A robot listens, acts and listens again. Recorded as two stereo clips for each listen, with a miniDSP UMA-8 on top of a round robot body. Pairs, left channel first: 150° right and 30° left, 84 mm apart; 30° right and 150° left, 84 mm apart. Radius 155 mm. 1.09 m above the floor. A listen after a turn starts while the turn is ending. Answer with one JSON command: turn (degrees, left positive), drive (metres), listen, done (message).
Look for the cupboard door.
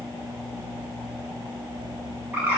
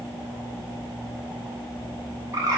{"listen": true}
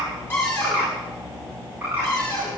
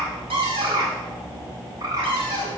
{"turn": 150}
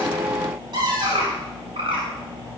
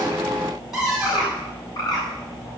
{"turn": 65}
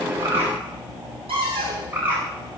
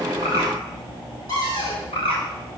{"turn": 10}
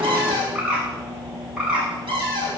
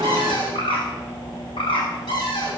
{"done": "Facing the cupboard door, over 4 m away."}